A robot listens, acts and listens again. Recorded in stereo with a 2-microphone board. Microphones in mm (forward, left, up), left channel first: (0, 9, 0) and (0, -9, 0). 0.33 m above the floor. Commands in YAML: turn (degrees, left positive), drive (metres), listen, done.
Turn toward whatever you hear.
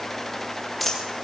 turn: 30
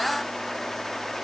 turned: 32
listen: true
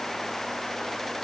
done: "I heard a dropped coin, but can't make it out now. It was about 35° right or 150° left."